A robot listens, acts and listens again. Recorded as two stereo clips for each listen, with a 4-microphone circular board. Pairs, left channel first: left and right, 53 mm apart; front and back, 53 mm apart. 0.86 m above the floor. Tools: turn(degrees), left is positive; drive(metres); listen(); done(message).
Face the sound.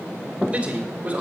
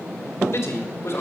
turn(degrees=-25)
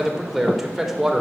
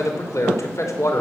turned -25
done("Facing the man speaking.")